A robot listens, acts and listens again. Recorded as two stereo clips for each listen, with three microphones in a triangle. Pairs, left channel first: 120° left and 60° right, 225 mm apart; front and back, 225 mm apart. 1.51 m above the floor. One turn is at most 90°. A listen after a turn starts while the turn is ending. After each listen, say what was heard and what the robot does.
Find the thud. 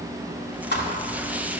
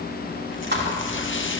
The thud: 150° left. Turn 90° left.
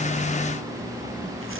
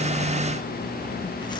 Nothing new. It was at 60° left. Turn 60° left.
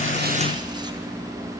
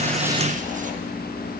Facing where the thud came from. I can't hear it now.